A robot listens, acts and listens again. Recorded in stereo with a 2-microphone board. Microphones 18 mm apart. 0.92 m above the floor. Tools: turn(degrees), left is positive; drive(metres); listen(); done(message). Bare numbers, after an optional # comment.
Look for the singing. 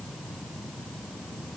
listen()
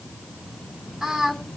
# The singing: about 20° right or 160° right.
turn(-20)
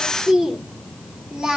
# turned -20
# So it is at 140° right.
turn(-140)
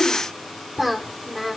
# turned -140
# The singing is now 25° right.
turn(-25)
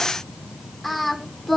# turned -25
done("Facing the singing, 2 to 4 m away.")